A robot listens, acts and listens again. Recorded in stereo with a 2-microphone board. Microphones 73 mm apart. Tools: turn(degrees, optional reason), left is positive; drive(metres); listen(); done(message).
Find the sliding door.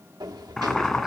turn(degrees=-65, reason="The sliding door: about 65° right or 115° right.")
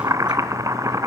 listen()
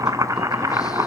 listen()
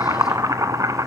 done("I heard a sliding door, but can't make it out now. It was about straight ahead or 50° right.")